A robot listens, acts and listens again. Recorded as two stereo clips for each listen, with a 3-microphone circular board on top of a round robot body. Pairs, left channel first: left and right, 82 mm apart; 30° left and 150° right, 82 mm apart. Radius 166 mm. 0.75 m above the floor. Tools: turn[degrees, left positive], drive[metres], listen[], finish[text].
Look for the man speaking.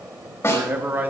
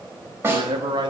Thought: The man speaking: 155° right.
Action: turn[-155]
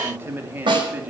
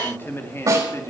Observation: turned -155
Thought: The man speaking is now 20° right.
Action: turn[-20]
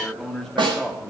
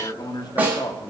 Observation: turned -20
Thought: The man speaking is now 15° left.
Action: turn[15]
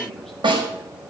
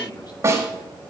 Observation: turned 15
Action: listen[]
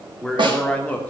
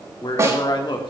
Thought: The man speaking is now 20° left.
Action: turn[20]
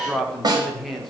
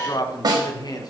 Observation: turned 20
Action: finish[Found it: a man speaking, straight ahead, 2 to 4 m away.]